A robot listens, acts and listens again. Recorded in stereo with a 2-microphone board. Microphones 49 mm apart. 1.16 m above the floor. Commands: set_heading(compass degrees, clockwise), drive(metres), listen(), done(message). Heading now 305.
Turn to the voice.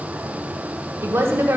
set_heading(5)
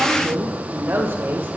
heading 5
set_heading(55)
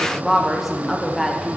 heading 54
done("Facing the woman speaking, 1 to 2 m away.")